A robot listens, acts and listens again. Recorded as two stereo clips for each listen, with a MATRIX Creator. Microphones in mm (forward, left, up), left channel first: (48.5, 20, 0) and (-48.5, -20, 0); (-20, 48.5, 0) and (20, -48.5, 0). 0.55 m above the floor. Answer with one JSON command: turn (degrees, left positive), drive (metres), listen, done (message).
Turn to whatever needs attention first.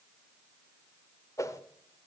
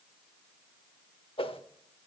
{"listen": true}
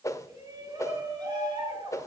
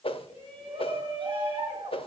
{"turn": -105}
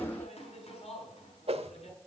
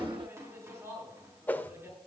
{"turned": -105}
{"done": "Facing the shout, over 4 m away."}